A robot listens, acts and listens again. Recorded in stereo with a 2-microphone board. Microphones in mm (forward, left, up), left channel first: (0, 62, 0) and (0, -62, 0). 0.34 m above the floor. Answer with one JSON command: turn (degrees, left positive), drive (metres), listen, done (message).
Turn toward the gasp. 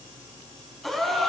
{"turn": 30}
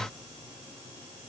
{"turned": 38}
{"listen": true}
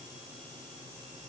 {"done": "I heard a gasp, but can't make it out now. It was about 35° right or 140° left."}